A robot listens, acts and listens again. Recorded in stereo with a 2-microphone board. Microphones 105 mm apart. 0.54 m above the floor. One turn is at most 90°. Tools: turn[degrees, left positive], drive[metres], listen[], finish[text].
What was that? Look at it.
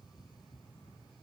Action: listen[]
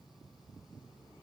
Action: listen[]
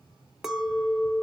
Action: turn[-30]
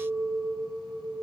Thought: So it is at 145° right.
Action: turn[-90]
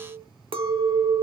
Thought: The clink is now 75° right.
Action: turn[-75]
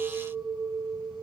Thought: The clink is now 15° right.
Action: turn[-15]
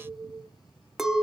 Action: finish[Facing the clink, under 1 m away.]